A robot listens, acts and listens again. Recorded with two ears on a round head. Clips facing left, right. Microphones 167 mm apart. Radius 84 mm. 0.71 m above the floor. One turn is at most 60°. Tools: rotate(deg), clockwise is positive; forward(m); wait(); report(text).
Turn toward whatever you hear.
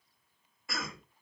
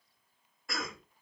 rotate(-30)
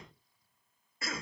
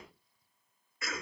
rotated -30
rotate(-60)
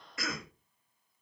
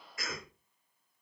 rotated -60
rotate(-60)
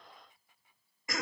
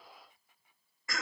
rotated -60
rotate(-20)
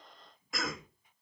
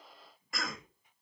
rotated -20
report("Found it: a cough, straight ahead, under 1 m away.")